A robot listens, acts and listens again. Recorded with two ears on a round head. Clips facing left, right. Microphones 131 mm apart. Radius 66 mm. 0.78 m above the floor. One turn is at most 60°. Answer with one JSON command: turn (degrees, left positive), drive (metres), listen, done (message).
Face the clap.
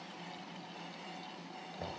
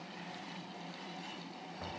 {"listen": true}
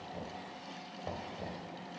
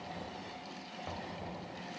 {"listen": true}
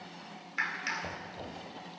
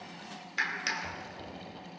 {"turn": -40}
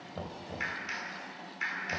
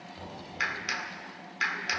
{"turn": -60}
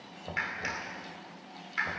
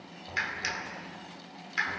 {"turn": -45}
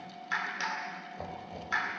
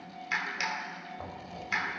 {"turn": -15}
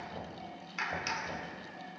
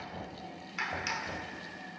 {"done": "Facing the clap."}